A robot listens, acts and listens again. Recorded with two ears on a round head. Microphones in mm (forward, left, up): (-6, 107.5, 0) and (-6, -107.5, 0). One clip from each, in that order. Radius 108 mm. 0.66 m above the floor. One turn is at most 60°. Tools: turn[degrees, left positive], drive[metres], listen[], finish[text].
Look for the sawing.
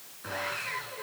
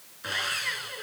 Thought: The sawing: about 75° right or 105° right.
Action: turn[-60]
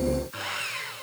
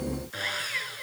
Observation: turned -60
Thought: So it is at 10° right.
Action: turn[-10]
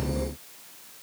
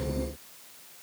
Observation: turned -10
Action: listen[]
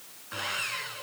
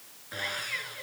Action: finish[Found it: sawing, straight ahead.]